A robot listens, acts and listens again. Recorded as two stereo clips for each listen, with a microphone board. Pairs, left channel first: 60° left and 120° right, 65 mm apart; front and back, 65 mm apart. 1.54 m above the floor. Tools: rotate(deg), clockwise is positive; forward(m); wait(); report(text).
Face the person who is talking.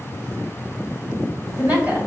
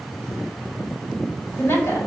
rotate(60)
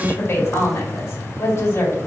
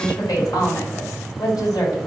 rotate(-10)
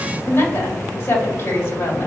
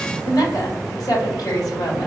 report("Facing the woman speaking.")